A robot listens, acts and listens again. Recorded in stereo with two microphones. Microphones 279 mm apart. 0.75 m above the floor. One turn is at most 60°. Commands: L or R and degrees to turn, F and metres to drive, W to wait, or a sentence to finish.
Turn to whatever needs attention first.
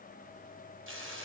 W
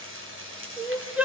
R30
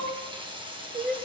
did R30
R60
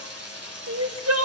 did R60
R60
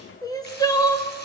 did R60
L15
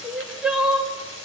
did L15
Facing the crying.